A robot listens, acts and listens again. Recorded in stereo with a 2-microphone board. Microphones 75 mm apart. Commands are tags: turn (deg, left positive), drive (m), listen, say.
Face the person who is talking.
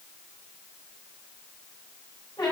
<listen/>
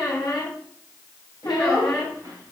<turn deg="-55"/>
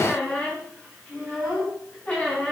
<say>Facing the child speaking.</say>